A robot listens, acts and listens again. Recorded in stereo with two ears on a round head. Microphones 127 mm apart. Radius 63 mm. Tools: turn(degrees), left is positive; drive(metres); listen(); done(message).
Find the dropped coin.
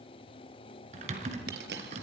turn(degrees=-90)
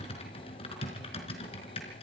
done("Facing where the dropped coin came from. I can't hear it now.")